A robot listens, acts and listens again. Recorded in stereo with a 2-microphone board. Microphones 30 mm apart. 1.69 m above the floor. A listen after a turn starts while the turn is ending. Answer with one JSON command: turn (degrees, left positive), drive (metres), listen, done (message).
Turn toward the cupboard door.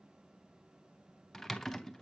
{"listen": true}
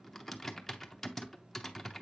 {"listen": true}
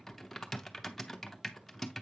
{"done": "I can't make out a cupboard door, only typing on a keyboard."}